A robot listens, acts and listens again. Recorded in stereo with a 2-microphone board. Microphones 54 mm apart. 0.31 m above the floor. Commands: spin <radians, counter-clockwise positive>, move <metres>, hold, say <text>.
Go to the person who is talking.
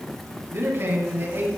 spin -0.79
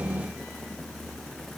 hold
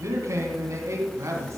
spin -1.48
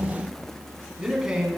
spin -0.17
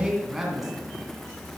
move 1.0
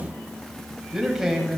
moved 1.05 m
spin -0.17
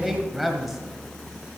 move 1.0
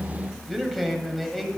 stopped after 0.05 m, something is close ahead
say I am next to the man speaking.